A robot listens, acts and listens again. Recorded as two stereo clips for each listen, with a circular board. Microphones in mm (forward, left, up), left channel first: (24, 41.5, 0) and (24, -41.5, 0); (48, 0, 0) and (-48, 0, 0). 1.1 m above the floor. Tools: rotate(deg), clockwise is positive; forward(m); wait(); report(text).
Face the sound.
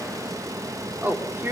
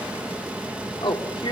rotate(25)
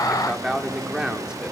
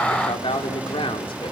report("Found it: a man speaking, straight ahead, 2 to 4 m away.")